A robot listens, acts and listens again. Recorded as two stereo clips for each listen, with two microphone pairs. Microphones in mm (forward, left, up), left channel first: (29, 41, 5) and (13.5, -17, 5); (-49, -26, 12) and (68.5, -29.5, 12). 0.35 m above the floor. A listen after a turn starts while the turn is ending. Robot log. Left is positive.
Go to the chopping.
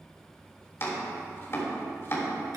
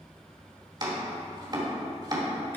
note: The chopping: 40° left.
cmd yaw +40
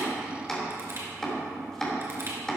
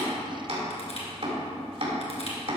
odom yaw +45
cmd fwd 1.0
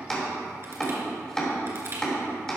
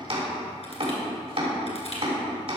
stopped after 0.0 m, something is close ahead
end: Something is in my way. I am facing the chopping but have not reached it.